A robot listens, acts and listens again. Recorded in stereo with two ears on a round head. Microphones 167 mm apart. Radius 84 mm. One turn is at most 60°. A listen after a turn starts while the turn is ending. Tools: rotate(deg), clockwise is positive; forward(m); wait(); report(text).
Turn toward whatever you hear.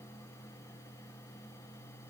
wait()
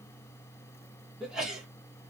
rotate(-30)
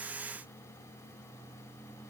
wait()
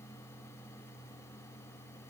report("I heard a sneeze, but can't make it out now. It was about 30° right or 150° left.")